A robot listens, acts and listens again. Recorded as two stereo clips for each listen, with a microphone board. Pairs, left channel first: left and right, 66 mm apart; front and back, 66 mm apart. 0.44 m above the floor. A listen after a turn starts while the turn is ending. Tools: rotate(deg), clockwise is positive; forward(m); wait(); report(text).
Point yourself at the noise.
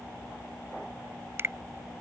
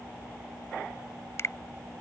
rotate(40)
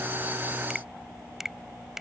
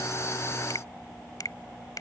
wait()
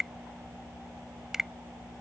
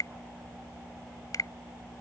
report("Found it: a finger snap, straight ahead.")